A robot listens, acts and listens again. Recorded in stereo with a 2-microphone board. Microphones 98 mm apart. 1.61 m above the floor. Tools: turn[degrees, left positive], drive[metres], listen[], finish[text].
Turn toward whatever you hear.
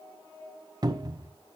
Thought: The cupboard door: about 45° right or 135° right.
Action: turn[-45]
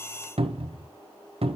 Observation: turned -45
Thought: So it is at 90° right.
Action: turn[-90]
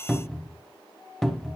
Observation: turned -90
Action: finish[Facing the cupboard door, under 1 m away.]